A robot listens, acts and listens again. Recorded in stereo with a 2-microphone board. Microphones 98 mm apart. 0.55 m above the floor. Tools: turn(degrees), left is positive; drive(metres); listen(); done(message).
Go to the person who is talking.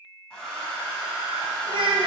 turn(degrees=-60)
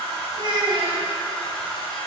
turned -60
turn(degrees=-60)
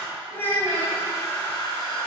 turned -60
turn(degrees=25)
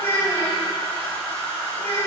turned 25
turn(degrees=25)
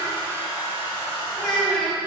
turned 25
drive(metres=1.0)
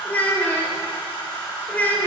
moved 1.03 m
turn(degrees=20)
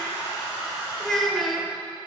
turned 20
drive(metres=1.0)
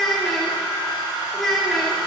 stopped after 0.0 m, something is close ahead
done("I am next to the child speaking.")